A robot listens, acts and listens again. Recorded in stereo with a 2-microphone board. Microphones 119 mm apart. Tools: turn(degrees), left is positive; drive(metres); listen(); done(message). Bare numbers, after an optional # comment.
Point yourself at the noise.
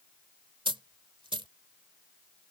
# The dropped coin: about 45° right or 135° right.
turn(-45)
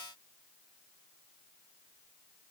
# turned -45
listen()
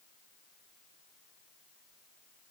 done("I heard a dropped coin, but can't make it out now. It was about straight ahead or 90° right.")